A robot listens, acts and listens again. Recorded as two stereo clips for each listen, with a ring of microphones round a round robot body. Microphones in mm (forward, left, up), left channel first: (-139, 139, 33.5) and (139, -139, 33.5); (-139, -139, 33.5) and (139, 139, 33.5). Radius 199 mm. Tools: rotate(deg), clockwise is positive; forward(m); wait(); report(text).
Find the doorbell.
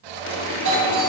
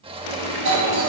report("Found it: a doorbell, straight ahead, 2 to 4 m away.")